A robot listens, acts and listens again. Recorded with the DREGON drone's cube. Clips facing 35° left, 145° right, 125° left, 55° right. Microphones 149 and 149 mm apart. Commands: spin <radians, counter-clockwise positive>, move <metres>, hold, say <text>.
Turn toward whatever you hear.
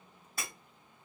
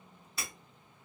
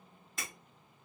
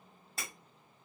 say Facing the breaking glass, 2 to 4 m away.